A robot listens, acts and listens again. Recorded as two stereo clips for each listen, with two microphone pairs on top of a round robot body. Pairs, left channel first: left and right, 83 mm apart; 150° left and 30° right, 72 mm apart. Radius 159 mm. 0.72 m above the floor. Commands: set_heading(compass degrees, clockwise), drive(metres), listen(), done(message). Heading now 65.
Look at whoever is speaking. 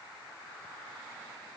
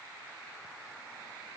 listen()
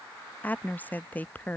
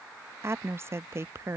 set_heading(45)
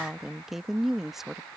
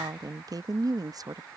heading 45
done("Facing the woman speaking.")